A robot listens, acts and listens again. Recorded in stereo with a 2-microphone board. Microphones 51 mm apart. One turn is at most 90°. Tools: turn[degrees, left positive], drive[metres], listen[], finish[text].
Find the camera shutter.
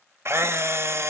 Thought: The camera shutter: about 60° right or 120° right.
Action: turn[-60]
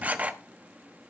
Thought: So it is at 35° right.
Action: turn[-35]
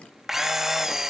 Thought: The camera shutter is now 10° right.
Action: turn[-10]
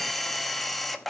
Action: finish[Facing the camera shutter.]